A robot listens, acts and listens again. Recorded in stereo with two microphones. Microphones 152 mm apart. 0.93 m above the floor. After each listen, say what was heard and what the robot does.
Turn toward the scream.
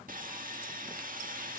Keep listening.
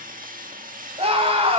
The scream: about 40° right or 140° right. Turn 40° right.
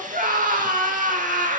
So it is at 100° right. Turn 100° right.
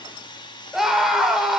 Found it: a scream, straight ahead, 2 to 4 m away.